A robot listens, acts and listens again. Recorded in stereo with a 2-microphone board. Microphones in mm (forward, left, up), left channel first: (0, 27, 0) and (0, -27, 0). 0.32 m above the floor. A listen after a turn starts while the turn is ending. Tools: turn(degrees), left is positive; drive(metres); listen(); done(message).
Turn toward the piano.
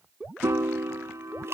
turn(degrees=-60)
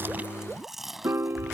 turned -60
turn(degrees=-55)
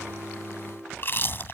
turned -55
done("Found it: a piano, straight ahead.")